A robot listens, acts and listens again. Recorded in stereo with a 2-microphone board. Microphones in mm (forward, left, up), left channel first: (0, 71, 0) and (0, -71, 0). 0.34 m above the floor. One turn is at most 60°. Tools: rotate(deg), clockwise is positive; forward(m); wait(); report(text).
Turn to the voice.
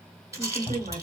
rotate(50)
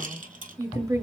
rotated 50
rotate(20)
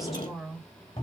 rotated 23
report("Found it: a woman speaking, straight ahead, 1 to 2 m away.")